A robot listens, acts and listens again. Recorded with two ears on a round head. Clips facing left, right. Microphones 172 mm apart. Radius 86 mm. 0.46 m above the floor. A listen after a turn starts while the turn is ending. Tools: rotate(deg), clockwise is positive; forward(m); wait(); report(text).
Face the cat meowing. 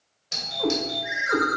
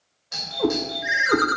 rotate(60)
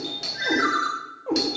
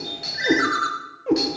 rotate(30)
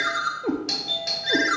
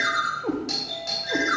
rotate(-25)
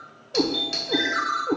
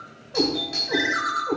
rotate(-25)
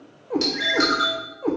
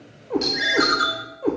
rotate(10)
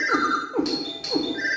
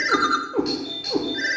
report("Found it: a cat meowing, straight ahead, 1 to 2 m away.")